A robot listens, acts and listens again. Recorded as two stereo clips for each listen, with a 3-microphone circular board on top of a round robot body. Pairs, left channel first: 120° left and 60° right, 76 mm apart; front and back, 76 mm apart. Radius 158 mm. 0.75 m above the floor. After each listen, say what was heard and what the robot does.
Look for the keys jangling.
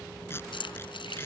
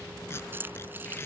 The keys jangling: 115° left. Turn 115° left.
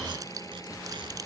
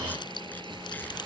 Keep listening.
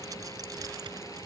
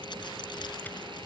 Keep listening.
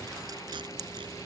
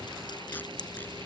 The keys jangling is now 25° right. Turn 25° right.
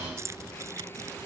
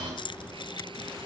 The keys jangling is now 10° right. Turn 10° right.
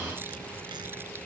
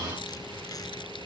Keep listening.
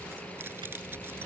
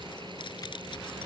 Keep listening.
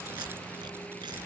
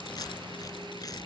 I heard keys jangling from this way, but can't make it out now.